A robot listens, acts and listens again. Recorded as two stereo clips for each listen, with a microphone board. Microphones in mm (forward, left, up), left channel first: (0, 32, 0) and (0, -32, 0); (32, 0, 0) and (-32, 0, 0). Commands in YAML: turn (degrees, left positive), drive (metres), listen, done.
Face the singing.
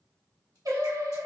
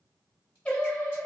turn: -70
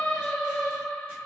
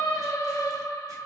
turn: 10
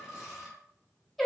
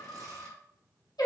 done: "Facing the singing."